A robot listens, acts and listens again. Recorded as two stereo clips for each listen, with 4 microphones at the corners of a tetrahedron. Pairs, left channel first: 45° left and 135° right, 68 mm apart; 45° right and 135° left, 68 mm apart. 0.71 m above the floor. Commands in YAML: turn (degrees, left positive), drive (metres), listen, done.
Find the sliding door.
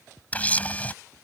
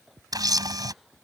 listen: true
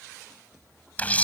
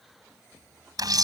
listen: true
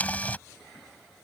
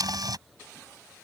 done: "I can't make out a sliding door, only a camera shutter."